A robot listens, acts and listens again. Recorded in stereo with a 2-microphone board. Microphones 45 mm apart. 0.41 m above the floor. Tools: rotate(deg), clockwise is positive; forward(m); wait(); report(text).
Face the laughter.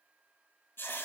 wait()
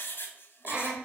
rotate(35)
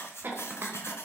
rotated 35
rotate(100)
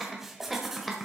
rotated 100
report("Found it: laughter, straight ahead.")